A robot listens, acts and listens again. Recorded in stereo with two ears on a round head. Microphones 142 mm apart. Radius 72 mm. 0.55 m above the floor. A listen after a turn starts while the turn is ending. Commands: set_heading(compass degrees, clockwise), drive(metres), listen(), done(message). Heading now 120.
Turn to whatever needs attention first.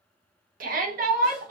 set_heading(175)
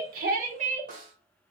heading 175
set_heading(225)
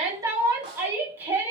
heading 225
set_heading(240)
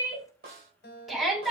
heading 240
done("Facing the shout.")